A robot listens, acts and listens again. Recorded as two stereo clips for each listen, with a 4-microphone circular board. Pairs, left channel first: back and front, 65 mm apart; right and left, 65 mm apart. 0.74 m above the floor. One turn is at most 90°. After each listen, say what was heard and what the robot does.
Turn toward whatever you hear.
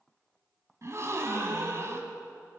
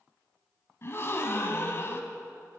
The gasp: 40° right. Turn 40° right.
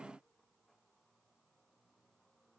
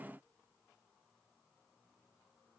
I heard a gasp from this way, but can't make it out now.